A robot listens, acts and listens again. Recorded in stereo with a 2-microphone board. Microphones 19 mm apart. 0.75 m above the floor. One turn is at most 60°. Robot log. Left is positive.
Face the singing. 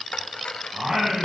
note: The singing: about 50° right or 130° right.
cmd yaw -50
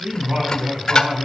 note: So it is at 65° right.
cmd yaw -60
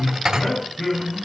note: The singing is now 15° left.
cmd yaw +15
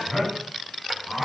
end: Facing the singing, over 4 m away.